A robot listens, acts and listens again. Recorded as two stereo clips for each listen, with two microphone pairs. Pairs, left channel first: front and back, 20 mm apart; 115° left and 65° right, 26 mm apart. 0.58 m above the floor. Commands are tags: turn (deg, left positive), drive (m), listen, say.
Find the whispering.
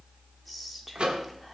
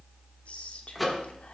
<listen/>
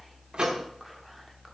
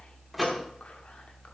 <listen/>
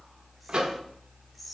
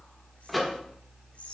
<turn deg="90"/>
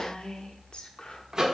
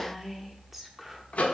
<turn deg="15"/>
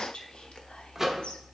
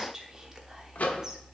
<say>Found it: whispering, straight ahead, 1 to 2 m away.</say>